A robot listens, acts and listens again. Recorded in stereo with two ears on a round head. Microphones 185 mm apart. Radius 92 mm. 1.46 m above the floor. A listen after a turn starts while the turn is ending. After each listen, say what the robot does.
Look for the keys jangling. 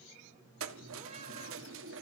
Turn 65° right.
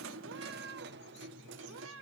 Turn 65° right.
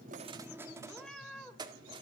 Turn 25° right.
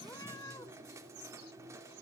Turn 15° right.
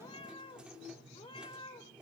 Facing the keys jangling, 2 to 4 m away.